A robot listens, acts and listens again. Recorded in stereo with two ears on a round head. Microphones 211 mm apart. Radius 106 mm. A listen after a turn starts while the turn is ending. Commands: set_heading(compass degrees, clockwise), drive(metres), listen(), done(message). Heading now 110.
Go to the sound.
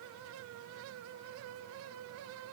listen()
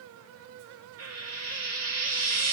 set_heading(175)
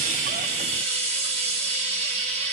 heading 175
set_heading(205)
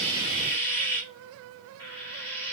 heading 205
set_heading(195)
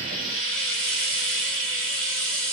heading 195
drive(1.0)
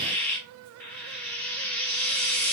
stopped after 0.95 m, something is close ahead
done("Arrived at the frying, straight ahead.")